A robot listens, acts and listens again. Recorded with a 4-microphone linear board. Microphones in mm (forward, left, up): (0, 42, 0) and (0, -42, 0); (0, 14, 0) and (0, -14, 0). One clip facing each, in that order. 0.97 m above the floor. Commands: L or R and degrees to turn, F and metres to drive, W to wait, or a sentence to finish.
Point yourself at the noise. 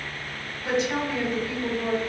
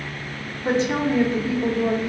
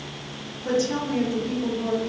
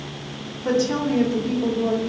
R30
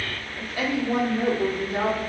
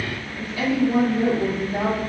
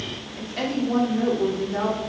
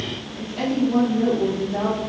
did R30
L65
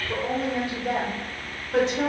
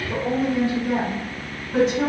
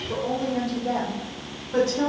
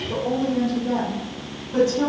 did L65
L30
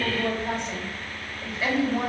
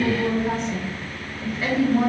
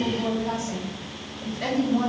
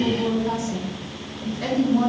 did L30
Facing the woman speaking.